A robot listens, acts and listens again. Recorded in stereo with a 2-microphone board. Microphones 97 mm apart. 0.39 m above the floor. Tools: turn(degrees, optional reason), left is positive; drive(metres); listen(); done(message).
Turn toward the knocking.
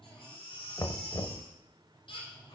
turn(degrees=40, reason="The knocking: about 40° left or 140° left.")
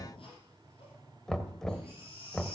done("Found it: knocking, straight ahead, 1 to 2 m away.")